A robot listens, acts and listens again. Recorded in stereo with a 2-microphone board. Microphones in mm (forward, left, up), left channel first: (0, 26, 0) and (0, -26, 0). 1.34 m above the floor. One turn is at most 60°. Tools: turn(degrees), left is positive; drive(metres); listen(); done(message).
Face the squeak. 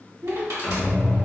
turn(degrees=30)
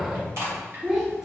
turn(degrees=60)
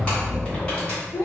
turn(degrees=40)
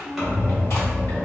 done("Found it: a squeak, straight ahead.")